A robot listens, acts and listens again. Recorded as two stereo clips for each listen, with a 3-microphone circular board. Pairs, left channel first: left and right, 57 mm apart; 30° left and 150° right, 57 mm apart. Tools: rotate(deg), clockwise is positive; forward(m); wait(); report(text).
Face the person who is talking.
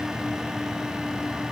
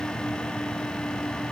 wait()
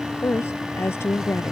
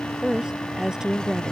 rotate(-135)
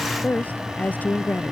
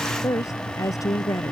rotate(-30)
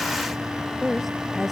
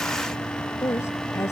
report("Found it: a woman speaking, straight ahead.")